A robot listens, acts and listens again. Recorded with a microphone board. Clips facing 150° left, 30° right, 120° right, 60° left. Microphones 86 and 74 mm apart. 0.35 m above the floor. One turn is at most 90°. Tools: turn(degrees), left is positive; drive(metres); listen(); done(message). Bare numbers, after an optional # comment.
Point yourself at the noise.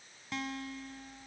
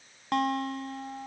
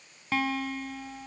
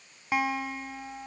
# The guitar: 10° right.
turn(-10)
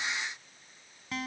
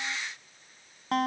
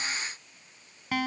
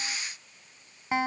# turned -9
done("Found it: a guitar, straight ahead.")